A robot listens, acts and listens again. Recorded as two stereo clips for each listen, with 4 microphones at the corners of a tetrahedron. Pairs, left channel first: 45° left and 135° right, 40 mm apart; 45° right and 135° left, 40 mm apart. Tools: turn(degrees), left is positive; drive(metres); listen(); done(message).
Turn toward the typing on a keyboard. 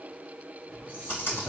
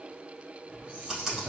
turn(degrees=50)
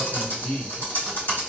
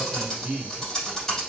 turn(degrees=30)
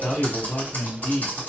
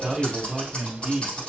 turn(degrees=10)
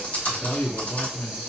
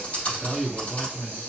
done("Facing the typing on a keyboard.")